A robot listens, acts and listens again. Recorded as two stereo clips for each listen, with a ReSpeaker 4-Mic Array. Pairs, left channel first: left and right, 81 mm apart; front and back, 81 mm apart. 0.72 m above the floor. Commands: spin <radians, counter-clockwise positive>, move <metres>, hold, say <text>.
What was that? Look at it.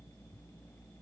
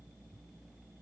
hold
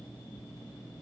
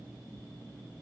hold
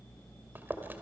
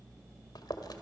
spin -0.44
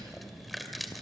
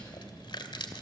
say Facing the chewing.